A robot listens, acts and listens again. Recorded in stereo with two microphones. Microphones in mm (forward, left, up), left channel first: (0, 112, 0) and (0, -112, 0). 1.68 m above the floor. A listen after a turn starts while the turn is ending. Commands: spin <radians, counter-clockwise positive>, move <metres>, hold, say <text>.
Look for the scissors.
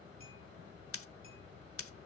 spin 1.57
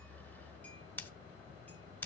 spin 0.17
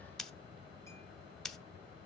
say Found it: scissors, straight ahead, under 1 m away.